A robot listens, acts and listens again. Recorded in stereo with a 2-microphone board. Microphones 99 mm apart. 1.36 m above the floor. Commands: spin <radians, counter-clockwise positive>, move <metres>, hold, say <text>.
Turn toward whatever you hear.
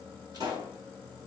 spin -0.79
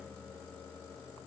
hold
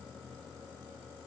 say I heard a pop, but can't make it out now. It was about straight ahead or 90° right.